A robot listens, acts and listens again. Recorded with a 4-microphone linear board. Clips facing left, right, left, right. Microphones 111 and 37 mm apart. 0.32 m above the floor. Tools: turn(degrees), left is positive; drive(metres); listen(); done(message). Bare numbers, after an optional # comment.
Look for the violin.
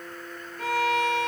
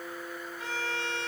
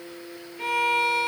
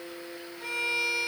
turn(90)
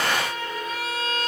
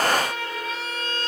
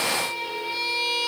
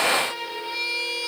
done("Found it: a violin, straight ahead, over 4 m away.")